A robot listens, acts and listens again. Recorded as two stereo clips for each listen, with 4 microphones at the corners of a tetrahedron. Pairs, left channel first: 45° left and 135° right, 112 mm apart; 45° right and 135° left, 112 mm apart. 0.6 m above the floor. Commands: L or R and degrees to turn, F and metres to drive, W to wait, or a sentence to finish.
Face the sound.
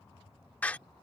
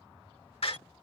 R30
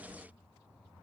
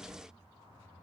I heard a door slam from this way, but can't make it out now.